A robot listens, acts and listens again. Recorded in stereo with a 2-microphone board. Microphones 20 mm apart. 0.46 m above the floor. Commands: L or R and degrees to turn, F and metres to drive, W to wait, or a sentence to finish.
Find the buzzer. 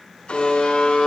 L70
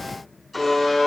Facing the buzzer, over 4 m away.